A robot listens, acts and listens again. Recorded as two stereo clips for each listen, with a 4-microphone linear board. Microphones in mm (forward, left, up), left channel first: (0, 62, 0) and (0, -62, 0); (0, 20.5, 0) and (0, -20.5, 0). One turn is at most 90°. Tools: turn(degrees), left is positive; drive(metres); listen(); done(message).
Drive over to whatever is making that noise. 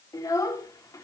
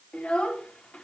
turn(degrees=25)
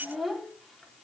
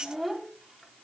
drive(metres=1.0)
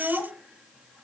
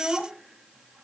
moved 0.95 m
drive(metres=1.0)
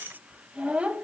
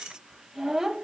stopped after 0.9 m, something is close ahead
turn(degrees=-10)
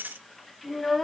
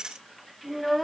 done("I am next to the child speaking.")